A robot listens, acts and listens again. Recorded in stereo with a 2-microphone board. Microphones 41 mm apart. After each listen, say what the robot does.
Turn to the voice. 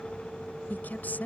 Turn 50° left.
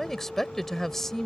Turn 10° left.
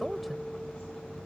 Keep listening.
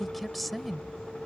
Found it: a woman speaking, straight ahead.